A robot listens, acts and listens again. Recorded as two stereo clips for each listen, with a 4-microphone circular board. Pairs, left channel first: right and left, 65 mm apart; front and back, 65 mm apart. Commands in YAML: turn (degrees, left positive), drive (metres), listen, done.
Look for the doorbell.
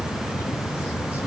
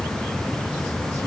listen: true
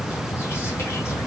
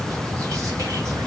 listen: true
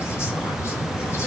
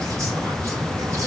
done: "I can't make out a doorbell."